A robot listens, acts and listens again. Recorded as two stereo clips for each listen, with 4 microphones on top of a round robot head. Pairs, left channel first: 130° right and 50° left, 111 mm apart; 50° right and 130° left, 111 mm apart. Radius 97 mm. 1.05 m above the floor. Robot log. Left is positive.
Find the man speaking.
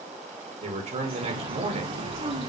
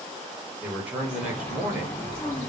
note: The man speaking: 55° left.
cmd yaw +55
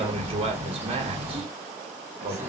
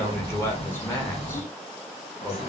note: The man speaking is now 20° left.
cmd yaw +20
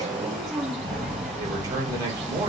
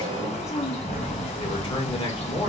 cmd idle
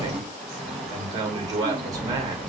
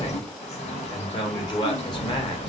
end: Found it: a man speaking, straight ahead, 1 to 2 m away.